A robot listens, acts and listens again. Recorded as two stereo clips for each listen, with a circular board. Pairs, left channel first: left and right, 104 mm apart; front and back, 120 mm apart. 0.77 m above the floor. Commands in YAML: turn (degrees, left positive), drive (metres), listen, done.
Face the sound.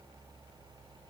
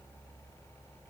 listen: true
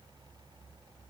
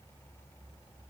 listen: true
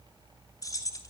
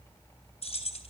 turn: 35
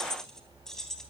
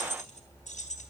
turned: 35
done: "Found it: keys jangling, straight ahead."